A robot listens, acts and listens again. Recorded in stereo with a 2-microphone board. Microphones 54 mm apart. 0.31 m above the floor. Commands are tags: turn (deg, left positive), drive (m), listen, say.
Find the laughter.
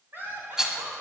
<turn deg="-45"/>
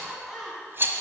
<say>Found it: laughter, straight ahead, 2 to 4 m away.</say>